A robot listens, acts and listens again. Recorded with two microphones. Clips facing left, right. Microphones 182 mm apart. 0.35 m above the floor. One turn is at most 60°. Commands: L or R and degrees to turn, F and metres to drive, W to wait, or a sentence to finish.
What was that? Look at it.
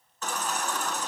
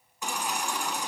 R30
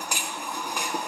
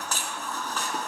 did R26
L15
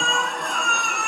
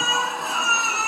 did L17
Facing the baby crying.